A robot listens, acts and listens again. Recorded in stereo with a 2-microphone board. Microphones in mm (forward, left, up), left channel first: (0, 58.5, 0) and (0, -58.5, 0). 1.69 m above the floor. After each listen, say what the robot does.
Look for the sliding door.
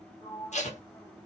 Turn 30° left.
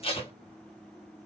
Keep listening.
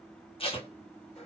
Keep listening.
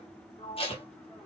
Turn 115° left.
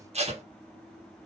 Keep listening.
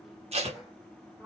Facing the sliding door, 2 to 4 m away.